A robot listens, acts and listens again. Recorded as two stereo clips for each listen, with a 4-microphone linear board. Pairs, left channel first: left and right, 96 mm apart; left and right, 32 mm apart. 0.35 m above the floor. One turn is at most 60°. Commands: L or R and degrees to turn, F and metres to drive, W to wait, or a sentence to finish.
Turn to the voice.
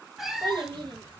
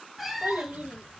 R55
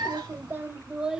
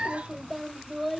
Found it: a child speaking, straight ahead.